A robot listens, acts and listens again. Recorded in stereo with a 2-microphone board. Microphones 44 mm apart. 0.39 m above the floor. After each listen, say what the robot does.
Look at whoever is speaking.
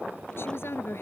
Turn 65° left.
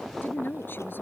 Turn 50° left.
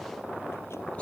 Keep listening.
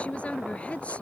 Turn 30° left.
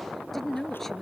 Facing the woman speaking.